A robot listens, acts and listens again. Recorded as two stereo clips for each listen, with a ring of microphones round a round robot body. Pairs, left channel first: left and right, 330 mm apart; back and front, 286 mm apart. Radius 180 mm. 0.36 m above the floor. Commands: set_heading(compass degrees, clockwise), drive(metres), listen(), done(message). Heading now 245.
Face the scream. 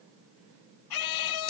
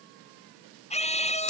set_heading(135)
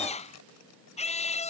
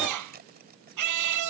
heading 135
set_heading(115)
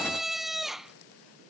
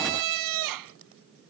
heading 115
done("Found it: a scream, straight ahead.")